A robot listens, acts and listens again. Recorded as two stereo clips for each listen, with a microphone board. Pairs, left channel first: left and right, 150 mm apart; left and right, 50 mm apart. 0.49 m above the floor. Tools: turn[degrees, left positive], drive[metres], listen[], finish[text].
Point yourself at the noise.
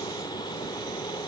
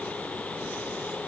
Action: listen[]
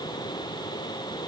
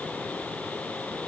Action: listen[]
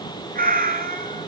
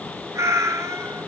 Thought: The cat meowing: about 75° right or 105° right.
Action: turn[-75]
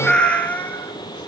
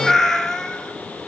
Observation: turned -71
Thought: So it is at 10° left.
Action: turn[10]
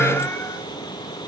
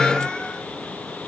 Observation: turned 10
Action: listen[]
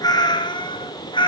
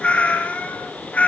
Thought: The cat meowing is now 35° left.
Action: turn[35]
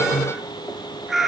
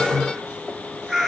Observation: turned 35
Action: finish[Found it: a cat meowing, straight ahead.]